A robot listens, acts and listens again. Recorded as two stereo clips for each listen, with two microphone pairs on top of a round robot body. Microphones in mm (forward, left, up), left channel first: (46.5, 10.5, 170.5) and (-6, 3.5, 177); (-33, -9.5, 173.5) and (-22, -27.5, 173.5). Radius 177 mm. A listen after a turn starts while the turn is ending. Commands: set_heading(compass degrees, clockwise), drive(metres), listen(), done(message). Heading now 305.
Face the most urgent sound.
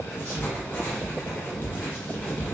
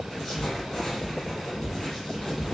listen()
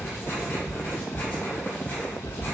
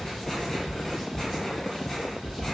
listen()
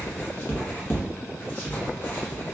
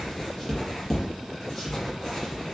done("I can't make out anything urgent to turn to.")